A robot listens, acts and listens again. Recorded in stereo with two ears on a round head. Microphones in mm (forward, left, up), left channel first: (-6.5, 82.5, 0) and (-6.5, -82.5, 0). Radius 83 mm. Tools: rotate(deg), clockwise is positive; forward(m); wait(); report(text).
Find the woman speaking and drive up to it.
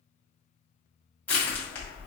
wait()
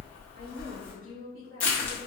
rotate(55)
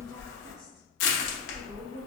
wait()
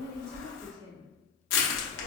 rotate(65)
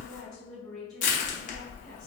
forward(1.0)
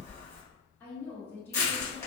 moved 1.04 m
rotate(-10)
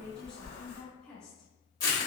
forward(1.0)
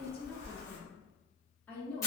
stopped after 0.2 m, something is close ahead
rotate(-10)
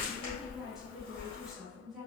report("I am next to the woman speaking.")